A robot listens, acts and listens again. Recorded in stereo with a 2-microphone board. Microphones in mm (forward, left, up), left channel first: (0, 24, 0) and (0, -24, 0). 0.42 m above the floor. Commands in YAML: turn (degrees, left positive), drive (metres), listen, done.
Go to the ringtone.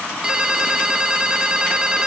turn: -15
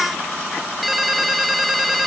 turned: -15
drive: 1.0
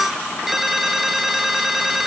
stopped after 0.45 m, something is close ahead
done: "Blocked. The ringtone is further on, straight ahead."